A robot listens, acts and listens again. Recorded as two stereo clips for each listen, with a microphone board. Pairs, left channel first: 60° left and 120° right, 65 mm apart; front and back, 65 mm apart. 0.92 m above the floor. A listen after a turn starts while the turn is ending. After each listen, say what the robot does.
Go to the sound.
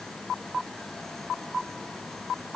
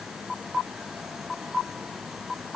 Keep listening.
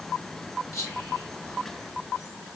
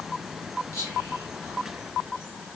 Turn 40° left.
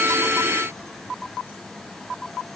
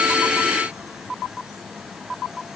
Keep listening.
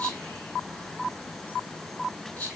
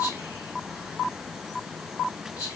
Drive 1.0 m forward.
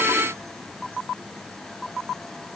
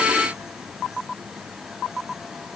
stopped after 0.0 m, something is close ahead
Keep listening.
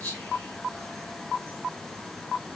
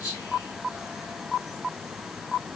Blocked. The whispering is further on, straight ahead.